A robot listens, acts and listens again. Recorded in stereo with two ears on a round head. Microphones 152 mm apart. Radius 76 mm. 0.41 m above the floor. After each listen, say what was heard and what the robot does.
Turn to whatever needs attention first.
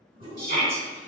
The shout: about 55° right or 125° right. Turn 55° right.
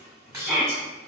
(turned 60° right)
So it is at 10° right. Turn 10° right.
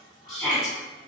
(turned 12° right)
Facing the shout.